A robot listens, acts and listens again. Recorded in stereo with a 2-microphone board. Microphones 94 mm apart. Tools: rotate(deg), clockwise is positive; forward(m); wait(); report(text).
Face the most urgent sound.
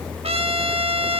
wait()
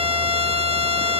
wait()
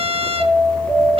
rotate(-30)
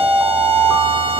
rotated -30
rotate(30)
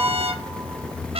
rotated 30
rotate(20)
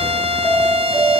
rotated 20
report("Facing the alarm.")